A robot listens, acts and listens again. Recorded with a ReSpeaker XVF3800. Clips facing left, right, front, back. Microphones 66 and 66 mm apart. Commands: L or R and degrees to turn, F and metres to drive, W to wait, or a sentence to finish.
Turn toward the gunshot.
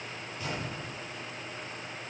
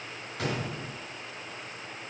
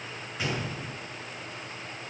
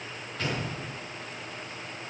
R80
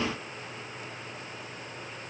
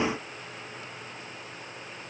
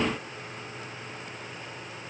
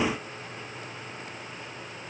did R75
Facing where the gunshot came from. I can't hear it now.